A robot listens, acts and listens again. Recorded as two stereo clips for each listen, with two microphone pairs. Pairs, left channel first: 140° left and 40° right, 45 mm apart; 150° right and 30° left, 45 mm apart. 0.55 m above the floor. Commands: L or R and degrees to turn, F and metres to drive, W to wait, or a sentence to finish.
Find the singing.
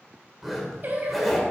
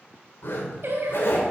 Facing the singing, 1 to 2 m away.